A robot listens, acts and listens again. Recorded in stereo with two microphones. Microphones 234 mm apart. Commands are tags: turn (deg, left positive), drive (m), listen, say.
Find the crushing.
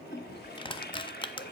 <turn deg="20"/>
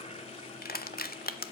<turn deg="140"/>
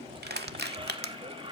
<turn deg="-45"/>
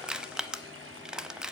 <say>Found it: crushing, straight ahead, under 1 m away.</say>